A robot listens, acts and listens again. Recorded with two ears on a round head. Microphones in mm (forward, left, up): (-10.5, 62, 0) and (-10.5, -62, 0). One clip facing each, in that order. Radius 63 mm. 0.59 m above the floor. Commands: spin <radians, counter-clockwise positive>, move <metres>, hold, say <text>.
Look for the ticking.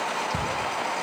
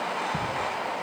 spin 0.52
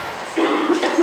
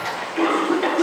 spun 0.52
hold
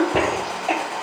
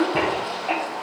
hold
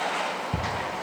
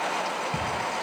spin 2.44
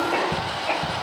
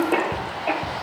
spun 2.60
say Facing the ticking, 1 to 2 m away.